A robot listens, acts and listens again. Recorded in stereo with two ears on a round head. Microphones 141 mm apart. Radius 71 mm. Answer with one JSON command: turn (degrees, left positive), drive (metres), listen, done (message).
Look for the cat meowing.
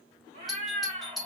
{"turn": -35}
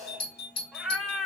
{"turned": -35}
{"done": "Facing the cat meowing, 1 to 2 m away."}